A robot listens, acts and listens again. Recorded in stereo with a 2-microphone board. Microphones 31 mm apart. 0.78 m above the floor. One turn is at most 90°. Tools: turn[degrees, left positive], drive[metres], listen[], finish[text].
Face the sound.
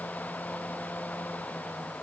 Action: listen[]
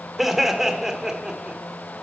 Thought: The laughter: about 20° right or 160° right.
Action: turn[-20]
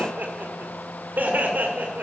Thought: So it is at 100° right.
Action: turn[-90]
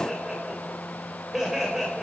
Thought: The laughter is now 20° right.
Action: turn[-20]
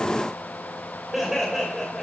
Action: finish[Found it: laughter, straight ahead, 2 to 4 m away.]